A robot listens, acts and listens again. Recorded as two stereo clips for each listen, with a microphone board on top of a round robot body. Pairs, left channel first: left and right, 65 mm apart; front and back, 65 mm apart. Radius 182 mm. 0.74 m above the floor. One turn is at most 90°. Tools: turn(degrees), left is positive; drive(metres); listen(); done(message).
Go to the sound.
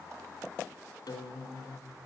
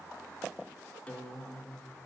turn(degrees=70)
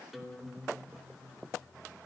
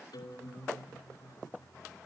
drive(metres=1.0)
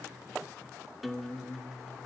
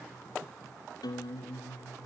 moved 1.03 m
drive(metres=1.0)
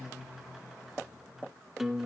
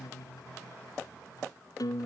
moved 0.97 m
drive(metres=1.0)
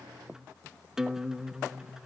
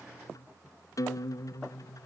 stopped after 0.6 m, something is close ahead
turn(degrees=-10)
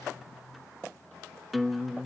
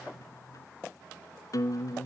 done("I am next to the guitar.")